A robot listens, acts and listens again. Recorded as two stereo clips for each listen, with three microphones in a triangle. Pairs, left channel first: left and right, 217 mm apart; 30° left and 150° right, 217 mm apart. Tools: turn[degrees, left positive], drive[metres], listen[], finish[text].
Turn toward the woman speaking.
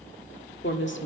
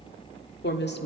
Thought: The woman speaking: 65° left.
Action: turn[65]
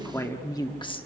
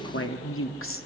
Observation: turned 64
Thought: The woman speaking is now 25° left.
Action: turn[25]
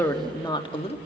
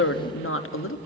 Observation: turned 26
Thought: The woman speaking is now 30° left.
Action: turn[30]
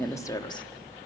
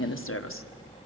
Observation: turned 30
Thought: The woman speaking is now 20° left.
Action: turn[20]
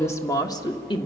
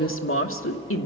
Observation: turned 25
Thought: The woman speaking is now 25° left.
Action: turn[25]
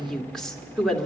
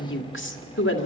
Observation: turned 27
Action: finish[Facing the woman speaking.]